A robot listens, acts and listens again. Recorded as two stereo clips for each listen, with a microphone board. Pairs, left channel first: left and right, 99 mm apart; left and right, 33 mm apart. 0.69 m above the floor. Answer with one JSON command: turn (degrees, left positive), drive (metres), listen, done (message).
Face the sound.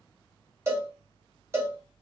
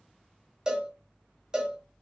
{"turn": -25}
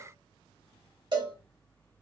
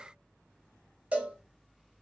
{"turn": -130}
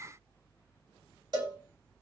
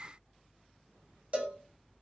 {"turn": -45}
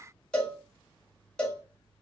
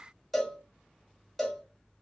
{"turn": 10}
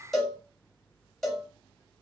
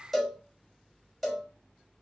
{"done": "Found it: a cowbell, straight ahead."}